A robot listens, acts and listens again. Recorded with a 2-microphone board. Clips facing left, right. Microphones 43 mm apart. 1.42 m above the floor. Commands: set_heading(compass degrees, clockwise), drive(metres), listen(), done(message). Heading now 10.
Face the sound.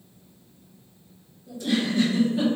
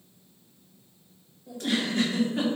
set_heading(70)
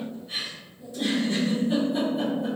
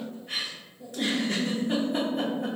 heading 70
set_heading(130)
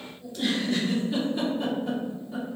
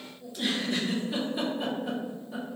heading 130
done("Facing the giggle, under 1 m away.")